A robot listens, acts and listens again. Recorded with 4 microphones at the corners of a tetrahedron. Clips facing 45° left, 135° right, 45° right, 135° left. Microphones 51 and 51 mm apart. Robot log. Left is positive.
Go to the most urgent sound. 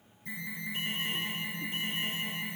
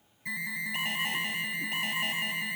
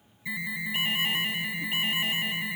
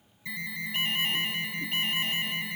note: The alarm: 125° right.
cmd yaw -125
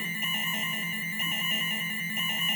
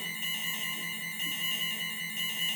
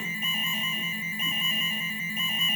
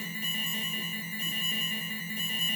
cmd fwd 1.0
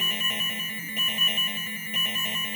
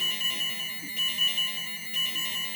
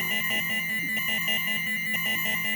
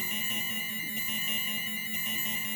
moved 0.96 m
note: The alarm is now 10° right.
cmd yaw -10
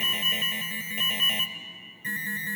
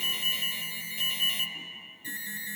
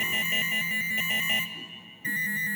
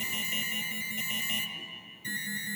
cmd fwd 1.0
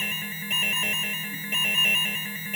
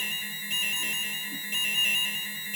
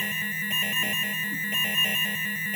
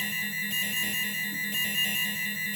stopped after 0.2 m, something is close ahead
end: I am next to the alarm.